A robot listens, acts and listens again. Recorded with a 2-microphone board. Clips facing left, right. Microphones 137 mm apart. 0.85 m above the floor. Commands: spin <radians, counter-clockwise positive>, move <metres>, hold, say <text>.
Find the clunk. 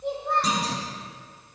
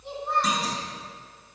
spin 0.61
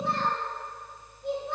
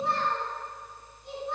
hold
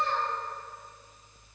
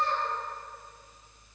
say I heard a clunk, but can't make it out now. It was about straight ahead or 110° left.